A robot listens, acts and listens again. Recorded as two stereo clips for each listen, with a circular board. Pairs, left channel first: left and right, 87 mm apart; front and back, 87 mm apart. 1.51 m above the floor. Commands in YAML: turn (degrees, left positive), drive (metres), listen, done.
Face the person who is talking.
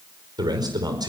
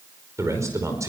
turn: -130
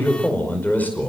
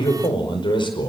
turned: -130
turn: 20
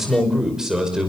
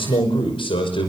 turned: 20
done: "Facing the man speaking, over 4 m away."